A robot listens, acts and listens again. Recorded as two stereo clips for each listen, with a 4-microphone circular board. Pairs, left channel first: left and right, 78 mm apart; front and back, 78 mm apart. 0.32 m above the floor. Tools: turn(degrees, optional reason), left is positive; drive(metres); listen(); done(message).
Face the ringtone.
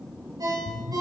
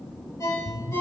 turn(degrees=-50, reason="The ringtone: 50° right.")
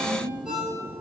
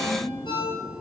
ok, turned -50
turn(degrees=-10, reason="The ringtone is now 10° right.")
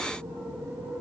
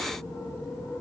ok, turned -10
listen()
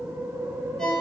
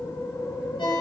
done("Facing the ringtone.")